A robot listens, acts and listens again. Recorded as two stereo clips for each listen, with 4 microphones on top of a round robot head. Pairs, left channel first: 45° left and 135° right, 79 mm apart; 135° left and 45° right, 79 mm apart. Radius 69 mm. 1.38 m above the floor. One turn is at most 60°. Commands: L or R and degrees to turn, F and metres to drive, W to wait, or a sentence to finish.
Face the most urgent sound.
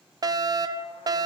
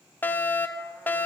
R60
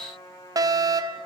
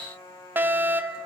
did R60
R60
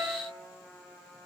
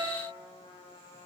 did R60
R45
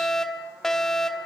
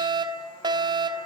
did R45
R40
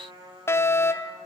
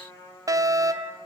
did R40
Facing the fire alarm.